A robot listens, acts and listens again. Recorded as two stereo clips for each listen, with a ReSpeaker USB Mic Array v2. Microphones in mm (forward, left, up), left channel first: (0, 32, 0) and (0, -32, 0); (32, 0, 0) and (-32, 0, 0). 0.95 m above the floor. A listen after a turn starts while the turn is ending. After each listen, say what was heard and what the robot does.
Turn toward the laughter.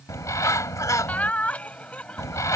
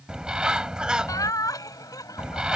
The laughter: 20° left. Turn 20° left.
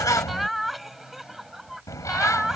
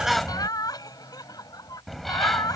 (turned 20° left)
The laughter is now 10° right. Turn 10° right.
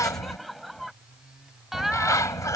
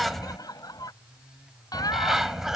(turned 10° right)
Facing the laughter.